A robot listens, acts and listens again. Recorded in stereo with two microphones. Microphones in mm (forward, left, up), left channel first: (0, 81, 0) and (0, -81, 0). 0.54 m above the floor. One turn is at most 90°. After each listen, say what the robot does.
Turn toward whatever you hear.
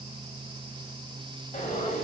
Turn 50° left.
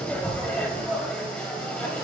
Found it: frying, straight ahead.